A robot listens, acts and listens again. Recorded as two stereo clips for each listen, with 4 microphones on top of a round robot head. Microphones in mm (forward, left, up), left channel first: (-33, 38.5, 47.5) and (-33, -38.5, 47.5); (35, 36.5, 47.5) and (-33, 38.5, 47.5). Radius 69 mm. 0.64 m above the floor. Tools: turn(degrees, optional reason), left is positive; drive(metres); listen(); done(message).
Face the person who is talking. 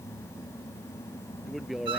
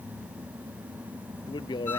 done("Found it: a man speaking, straight ahead.")